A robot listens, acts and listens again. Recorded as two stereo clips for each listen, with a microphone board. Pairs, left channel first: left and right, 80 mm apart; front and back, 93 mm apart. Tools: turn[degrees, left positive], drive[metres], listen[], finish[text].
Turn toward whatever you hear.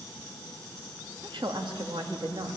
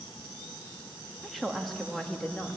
Thought: The woman speaking: 80° right.
Action: turn[-80]
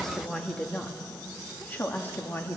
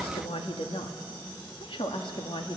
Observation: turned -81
Thought: The woman speaking is now 25° left.
Action: turn[25]
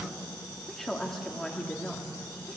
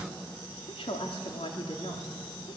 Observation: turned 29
Thought: The woman speaking is now 10° left.
Action: turn[10]
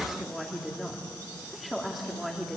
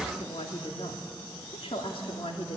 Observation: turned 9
Action: finish[Found it: a woman speaking, straight ahead, 2 to 4 m away.]